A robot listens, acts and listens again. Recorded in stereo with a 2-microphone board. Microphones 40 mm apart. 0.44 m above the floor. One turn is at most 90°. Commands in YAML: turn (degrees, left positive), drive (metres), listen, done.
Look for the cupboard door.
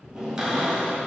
turn: -15
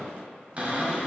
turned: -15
turn: -90
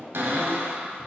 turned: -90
turn: -90
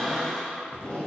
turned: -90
done: "Facing the cupboard door."